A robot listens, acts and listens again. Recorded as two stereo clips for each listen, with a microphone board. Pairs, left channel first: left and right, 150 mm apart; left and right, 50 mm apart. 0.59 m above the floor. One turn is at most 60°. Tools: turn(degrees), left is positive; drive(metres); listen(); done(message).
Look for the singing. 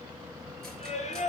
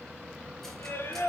turn(degrees=50)
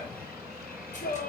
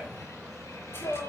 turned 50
turn(degrees=60)
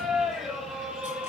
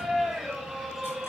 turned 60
done("Found it: singing, straight ahead.")